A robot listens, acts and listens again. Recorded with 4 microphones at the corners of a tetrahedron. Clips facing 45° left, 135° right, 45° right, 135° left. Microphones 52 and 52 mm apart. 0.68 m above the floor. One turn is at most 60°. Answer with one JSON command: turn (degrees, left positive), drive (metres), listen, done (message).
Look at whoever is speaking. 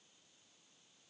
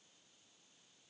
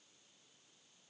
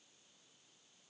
{"listen": true}
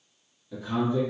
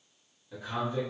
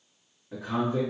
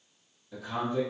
{"turn": -55}
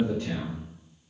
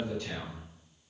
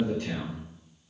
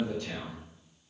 {"done": "Facing the man speaking."}